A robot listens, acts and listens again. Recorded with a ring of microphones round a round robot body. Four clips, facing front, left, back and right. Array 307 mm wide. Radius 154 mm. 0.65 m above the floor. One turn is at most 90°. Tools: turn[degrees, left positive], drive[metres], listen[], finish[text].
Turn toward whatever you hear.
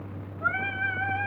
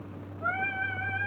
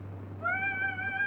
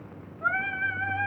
Thought: The singing: 30° right.
Action: turn[-30]
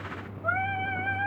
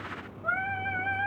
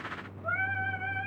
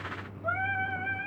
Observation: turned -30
Thought: The singing is now 35° left.
Action: turn[35]
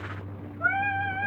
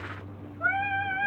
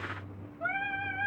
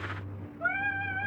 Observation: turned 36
Thought: The singing is now 50° left.
Action: turn[50]
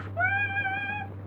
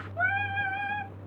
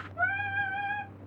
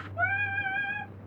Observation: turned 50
Thought: The singing is now 25° left.
Action: turn[25]
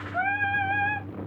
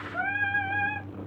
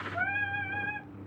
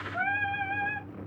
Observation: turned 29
Thought: The singing is now 10° left.
Action: turn[10]
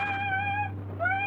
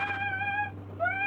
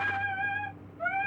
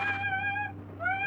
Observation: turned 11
Action: finish[Found it: singing, straight ahead.]